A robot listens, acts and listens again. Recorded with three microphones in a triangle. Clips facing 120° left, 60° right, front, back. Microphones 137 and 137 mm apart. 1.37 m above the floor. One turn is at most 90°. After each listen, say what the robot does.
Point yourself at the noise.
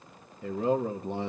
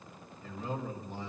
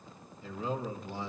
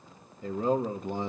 Turn 90° left.
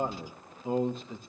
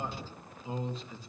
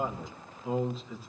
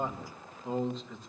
Turn 85° left.
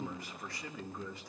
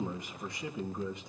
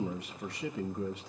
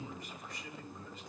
Turn 10° left.
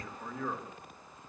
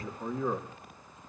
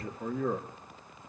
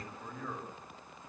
Found it: a man speaking, straight ahead.